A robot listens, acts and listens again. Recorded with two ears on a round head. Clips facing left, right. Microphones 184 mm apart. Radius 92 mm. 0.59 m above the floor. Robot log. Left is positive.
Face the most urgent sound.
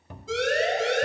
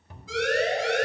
note: The siren: about 25° left or 155° left.
cmd yaw +25
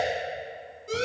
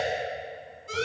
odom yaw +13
note: So it is at 145° left.
cmd yaw +145
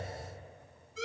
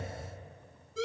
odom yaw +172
note: The siren is now 30° right.
cmd yaw -30
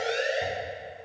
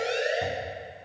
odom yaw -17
note: The siren is now 10° right.
cmd yaw -10
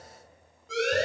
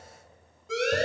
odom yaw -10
end: Found it: a siren, straight ahead.